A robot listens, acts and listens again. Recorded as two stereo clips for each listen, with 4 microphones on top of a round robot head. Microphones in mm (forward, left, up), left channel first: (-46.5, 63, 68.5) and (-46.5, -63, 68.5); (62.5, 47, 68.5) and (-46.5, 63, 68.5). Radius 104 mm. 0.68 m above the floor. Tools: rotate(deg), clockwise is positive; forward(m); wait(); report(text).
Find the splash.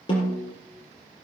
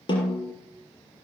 wait()
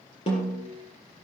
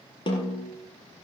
wait()
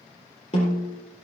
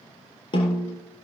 report("I can't make out a splash to turn to.")